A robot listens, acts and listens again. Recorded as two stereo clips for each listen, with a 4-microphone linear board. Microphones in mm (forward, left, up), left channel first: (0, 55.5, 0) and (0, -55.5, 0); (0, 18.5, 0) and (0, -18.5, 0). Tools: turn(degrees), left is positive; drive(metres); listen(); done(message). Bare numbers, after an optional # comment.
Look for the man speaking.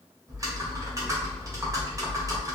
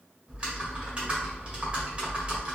listen()
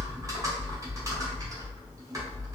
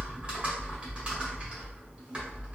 listen()
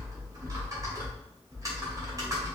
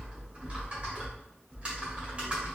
done("I can't make out a man speaking, only typing on a keyboard.")